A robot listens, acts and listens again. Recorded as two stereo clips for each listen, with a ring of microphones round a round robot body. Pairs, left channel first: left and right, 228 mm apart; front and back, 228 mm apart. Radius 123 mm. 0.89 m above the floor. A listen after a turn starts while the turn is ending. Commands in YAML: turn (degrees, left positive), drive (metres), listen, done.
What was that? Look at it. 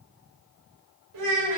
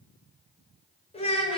turn: -65
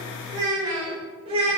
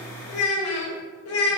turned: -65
turn: -25
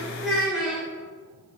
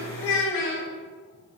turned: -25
done: "Facing the child speaking."